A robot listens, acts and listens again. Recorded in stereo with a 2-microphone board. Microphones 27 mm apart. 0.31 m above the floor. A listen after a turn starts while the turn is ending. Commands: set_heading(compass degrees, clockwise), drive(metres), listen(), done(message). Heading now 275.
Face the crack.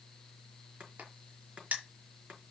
set_heading(5)
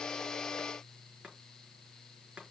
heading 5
done("Facing where the crack came from. I can't hear it now.")